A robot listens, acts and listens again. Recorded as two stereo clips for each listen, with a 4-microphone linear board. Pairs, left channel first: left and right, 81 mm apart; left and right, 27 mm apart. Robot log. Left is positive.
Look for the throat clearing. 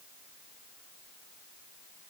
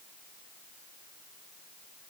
cmd idle
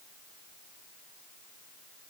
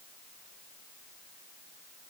cmd idle
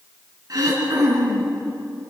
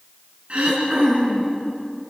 note: The throat clearing: about 50° right or 130° right.
cmd yaw -50
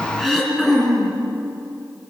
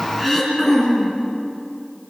end: Facing the throat clearing.